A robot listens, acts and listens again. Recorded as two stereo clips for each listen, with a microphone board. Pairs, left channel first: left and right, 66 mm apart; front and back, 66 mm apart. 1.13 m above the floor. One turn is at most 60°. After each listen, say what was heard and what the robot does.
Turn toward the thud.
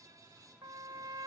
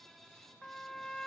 Keep listening.
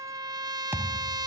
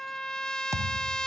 The thud: 145° right. Turn 60° right.
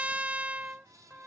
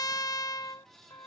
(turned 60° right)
Nothing new. It was at 85° right. Turn 60° right.
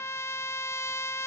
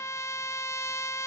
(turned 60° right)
Nothing new. It was at 25° right. Turn 25° right.
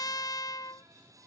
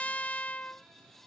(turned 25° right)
I heard a thud from this way, but can't make it out now.